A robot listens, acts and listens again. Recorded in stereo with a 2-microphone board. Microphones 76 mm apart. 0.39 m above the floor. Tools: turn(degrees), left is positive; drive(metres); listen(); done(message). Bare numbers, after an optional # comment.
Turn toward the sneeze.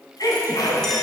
# The sneeze: about 60° left or 120° left.
turn(60)
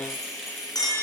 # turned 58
listen()
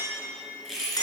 done("I heard a sneeze, but can't make it out now. It was about 5° left or 60° left.")